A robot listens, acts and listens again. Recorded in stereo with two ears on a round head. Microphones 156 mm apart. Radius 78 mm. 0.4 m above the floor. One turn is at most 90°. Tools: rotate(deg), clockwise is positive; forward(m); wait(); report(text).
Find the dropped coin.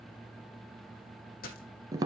rotate(-55)
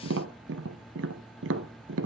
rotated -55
wait()
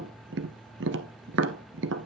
report("I heard a dropped coin, but can't make it out now. It was about straight ahead or 70° left.")